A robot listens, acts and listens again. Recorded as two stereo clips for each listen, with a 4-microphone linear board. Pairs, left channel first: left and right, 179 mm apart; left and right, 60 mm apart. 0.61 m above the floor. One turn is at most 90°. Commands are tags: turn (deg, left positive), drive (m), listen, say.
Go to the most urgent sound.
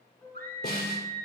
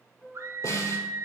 <turn deg="-60"/>
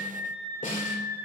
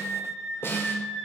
<turn deg="-15"/>
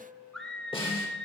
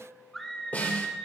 <drive m="1.0"/>
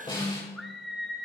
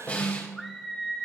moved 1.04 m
<drive m="1.0"/>
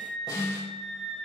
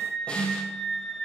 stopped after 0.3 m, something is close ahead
<say>I am next to the scream.</say>